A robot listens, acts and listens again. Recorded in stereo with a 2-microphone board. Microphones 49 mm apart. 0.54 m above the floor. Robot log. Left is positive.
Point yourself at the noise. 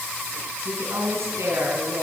note: The woman speaking: about 75° right or 105° right.
cmd yaw -75
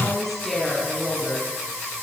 note: So it is at 10° left.
cmd yaw +10
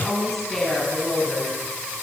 note: The woman speaking is now 10° left.
cmd yaw +10
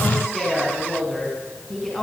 end: Facing the woman speaking, over 4 m away.